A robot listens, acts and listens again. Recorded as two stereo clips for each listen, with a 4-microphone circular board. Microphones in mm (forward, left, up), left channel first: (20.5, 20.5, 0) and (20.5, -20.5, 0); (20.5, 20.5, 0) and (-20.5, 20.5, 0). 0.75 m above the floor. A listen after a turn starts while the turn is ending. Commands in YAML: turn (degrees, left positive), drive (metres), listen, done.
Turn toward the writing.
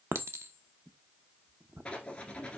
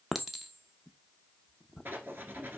turn: 155
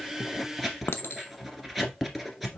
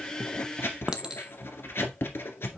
done: "Found it: writing, straight ahead."